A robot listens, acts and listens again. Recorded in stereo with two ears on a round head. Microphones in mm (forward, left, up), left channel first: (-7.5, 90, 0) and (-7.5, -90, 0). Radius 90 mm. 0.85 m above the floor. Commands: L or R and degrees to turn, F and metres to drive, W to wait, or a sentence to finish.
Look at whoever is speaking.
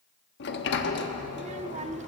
R35
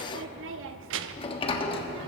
R115
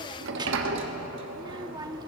R20
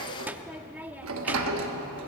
R10
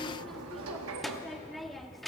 Found it: a child speaking, straight ahead.